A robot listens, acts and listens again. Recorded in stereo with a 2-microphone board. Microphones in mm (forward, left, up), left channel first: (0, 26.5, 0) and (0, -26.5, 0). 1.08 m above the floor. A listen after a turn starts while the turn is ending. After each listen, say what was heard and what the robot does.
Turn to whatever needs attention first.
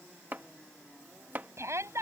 The shout: about 60° right or 120° right. Turn 60° right.
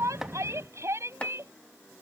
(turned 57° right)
So it is at 65° right. Turn 65° right.
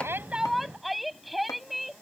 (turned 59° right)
Facing the shout.